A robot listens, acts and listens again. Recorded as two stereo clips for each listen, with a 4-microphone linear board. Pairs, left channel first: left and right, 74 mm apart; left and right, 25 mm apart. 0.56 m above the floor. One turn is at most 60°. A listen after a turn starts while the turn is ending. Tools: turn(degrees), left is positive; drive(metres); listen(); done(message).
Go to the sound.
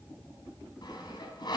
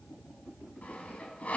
turn(degrees=60)
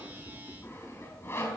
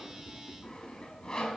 turn(degrees=35)
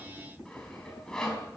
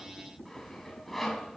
turn(degrees=10)
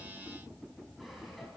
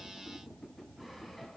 drive(metres=1.0)
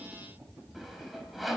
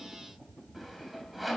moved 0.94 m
drive(metres=1.0)
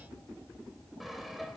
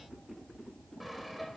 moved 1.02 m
drive(metres=1.0)
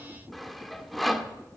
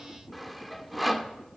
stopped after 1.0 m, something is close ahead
done("Arrived at the sawing, straight ahead.")